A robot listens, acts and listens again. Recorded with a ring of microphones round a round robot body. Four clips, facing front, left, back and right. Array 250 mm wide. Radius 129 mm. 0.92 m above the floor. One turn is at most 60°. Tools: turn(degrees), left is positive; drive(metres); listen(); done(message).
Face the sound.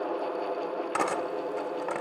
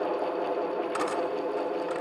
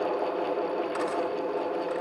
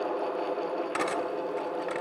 turn(degrees=-15)
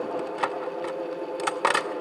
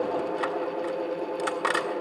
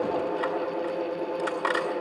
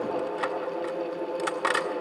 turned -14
done("Found it: cutlery clinking, straight ahead, 1 to 2 m away.")